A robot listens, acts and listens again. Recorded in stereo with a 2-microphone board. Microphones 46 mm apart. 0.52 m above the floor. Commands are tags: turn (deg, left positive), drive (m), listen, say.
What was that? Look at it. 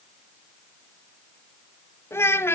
<turn deg="65"/>
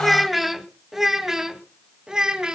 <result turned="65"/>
<turn deg="-20"/>
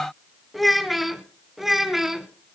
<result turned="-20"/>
<turn deg="-10"/>
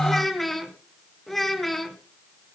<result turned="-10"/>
<say>Facing the child speaking.</say>